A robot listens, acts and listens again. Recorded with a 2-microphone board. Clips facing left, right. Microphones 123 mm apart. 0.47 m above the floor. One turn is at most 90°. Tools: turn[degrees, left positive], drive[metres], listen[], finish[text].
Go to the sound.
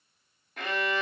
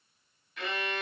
Thought: The violin: about 40° left or 140° left.
Action: turn[40]
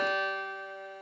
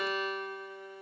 Thought: So it is at 95° left.
Action: turn[90]
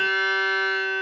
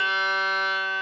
Thought: The violin is now 15° right.
Action: turn[-15]
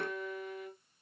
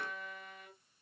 Action: drive[1.0]
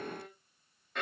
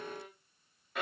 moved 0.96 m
Action: drive[1.0]
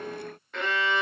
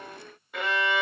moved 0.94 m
Thought: The violin is now 10° right.
Action: turn[-10]
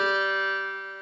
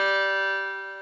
Action: drive[1.0]
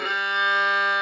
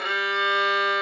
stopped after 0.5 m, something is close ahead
Action: finish[Arrived at the violin, straight ahead.]